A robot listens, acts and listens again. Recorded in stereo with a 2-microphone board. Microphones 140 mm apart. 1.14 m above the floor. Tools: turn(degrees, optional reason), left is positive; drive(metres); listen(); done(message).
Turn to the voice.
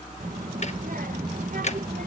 turn(degrees=-90)
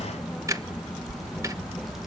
done("Found it: a child speaking, straight ahead.")